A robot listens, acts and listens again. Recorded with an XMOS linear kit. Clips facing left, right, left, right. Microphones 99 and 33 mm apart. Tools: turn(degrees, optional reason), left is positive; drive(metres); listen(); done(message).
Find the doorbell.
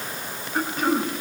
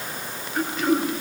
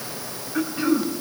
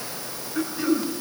listen()
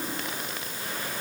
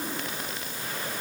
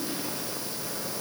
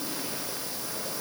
listen()
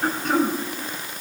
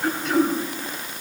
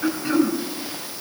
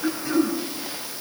done("I can't make out a doorbell to turn to.")